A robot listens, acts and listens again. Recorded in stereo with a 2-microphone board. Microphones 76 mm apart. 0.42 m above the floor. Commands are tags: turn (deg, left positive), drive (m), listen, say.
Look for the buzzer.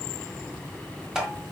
<listen/>
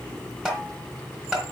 <listen/>
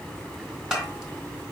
<say>I can't make out a buzzer to turn to.</say>